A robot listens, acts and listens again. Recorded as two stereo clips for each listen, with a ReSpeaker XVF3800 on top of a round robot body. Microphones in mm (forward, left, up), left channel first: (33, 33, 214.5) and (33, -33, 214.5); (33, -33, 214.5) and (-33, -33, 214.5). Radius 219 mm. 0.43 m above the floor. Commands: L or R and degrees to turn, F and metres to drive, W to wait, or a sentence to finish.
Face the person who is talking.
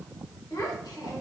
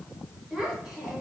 L100
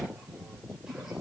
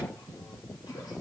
W
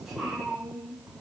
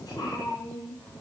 Found it: a child speaking, straight ahead.